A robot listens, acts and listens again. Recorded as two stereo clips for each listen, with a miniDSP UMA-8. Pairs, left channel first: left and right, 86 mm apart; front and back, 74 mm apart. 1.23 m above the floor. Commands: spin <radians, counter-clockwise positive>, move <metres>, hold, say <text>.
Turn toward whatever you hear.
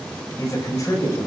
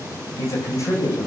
spin 0.70
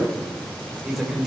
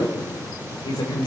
say Found it: a man speaking, straight ahead, over 4 m away.